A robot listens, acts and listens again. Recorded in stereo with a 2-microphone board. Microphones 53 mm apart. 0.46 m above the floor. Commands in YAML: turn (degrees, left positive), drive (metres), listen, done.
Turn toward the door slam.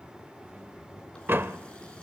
turn: -45
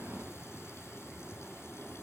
listen: true
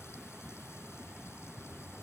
done: "I heard a door slam, but can't make it out now. It was about straight ahead or 90° right."